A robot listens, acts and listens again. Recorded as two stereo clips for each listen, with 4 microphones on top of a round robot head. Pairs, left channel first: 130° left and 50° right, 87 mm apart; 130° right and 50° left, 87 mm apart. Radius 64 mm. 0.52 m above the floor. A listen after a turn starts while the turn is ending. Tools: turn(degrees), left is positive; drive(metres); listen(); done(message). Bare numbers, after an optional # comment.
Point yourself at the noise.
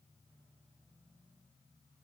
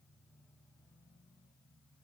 listen()
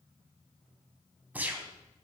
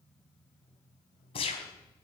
# The gunshot: 120° right.
turn(-120)
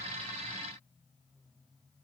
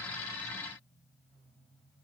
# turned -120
done("Facing where the gunshot came from. I can't hear it now.")